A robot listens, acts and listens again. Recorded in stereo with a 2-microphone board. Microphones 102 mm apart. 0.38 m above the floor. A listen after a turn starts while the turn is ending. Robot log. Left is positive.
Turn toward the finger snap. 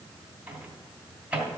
cmd idle
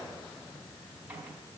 cmd idle
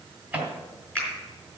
cmd yaw +30
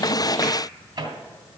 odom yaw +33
cmd idle
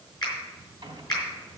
note: So it is at 135° left.
cmd yaw +135
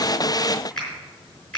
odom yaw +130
note: The finger snap is now 10° left.
cmd yaw +10
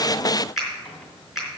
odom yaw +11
end: Found it: a finger snap, straight ahead, over 4 m away.